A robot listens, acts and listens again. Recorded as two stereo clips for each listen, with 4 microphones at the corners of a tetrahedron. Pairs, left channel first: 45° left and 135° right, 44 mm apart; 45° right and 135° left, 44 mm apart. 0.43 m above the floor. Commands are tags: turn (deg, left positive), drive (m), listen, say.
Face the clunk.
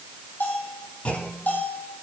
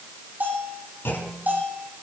<say>Facing the clunk.</say>